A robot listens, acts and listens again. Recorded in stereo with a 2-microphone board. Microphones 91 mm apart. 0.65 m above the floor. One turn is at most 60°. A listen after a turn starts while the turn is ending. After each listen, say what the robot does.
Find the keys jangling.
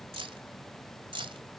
Turn 60° right.
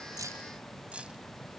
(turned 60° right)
Keep listening.
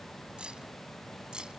Keep listening.
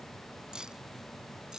Found it: keys jangling, straight ahead.